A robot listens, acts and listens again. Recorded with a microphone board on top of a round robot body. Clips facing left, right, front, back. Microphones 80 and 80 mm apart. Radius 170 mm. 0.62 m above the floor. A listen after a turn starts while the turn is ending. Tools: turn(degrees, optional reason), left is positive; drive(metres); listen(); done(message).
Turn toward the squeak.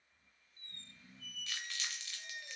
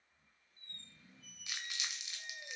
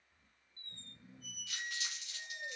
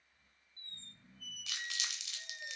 turn(degrees=70, reason="The squeak: 70° left.")
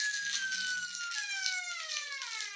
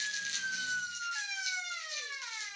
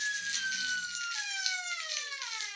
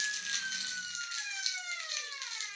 done("Found it: a squeak, straight ahead.")